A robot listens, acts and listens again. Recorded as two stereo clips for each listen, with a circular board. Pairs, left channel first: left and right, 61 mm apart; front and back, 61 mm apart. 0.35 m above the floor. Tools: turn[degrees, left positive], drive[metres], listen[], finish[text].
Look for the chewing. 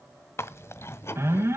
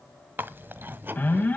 Thought: The chewing: 130° left.
Action: turn[130]
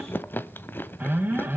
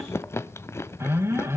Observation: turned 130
Thought: The chewing is now 35° left.
Action: turn[35]
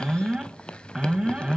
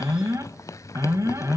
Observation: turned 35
Thought: The chewing is now 15° left.
Action: turn[15]
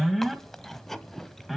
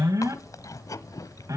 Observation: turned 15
Action: finish[Facing the chewing.]